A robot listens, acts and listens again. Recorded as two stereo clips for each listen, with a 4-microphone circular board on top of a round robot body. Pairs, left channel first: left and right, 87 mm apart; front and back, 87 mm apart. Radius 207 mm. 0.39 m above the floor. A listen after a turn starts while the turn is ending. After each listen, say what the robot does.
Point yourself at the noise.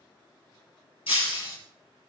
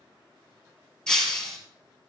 Turn 80° left.
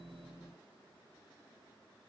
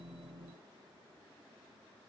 I heard breaking glass from this way, but can't make it out now.